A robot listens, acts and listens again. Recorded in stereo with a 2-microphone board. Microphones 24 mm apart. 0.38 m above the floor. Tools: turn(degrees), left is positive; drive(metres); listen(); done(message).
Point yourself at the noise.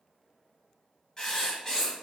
turn(degrees=30)
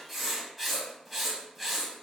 done("Found it: writing, straight ahead, 1 to 2 m away.")